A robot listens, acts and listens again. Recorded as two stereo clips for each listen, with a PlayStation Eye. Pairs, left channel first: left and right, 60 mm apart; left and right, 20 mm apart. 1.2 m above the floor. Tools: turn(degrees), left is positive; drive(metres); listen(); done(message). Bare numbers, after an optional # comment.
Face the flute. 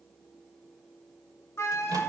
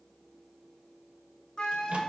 # The flute: about 45° left or 135° left.
turn(45)
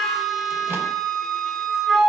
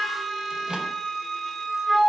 done("Found it: a flute, straight ahead.")